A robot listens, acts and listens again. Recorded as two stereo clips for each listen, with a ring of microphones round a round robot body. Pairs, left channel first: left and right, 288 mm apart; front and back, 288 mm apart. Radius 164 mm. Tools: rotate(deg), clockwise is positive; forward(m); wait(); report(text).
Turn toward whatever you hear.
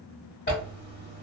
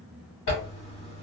rotate(-35)
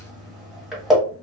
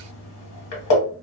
report("Facing the zipper.")